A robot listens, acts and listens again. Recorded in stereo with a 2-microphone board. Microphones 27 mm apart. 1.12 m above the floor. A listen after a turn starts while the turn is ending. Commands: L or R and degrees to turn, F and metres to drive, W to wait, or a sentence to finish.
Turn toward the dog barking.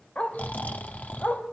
L65
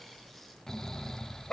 L35
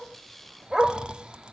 R25
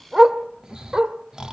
R35
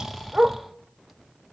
R30
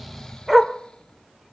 Facing the dog barking.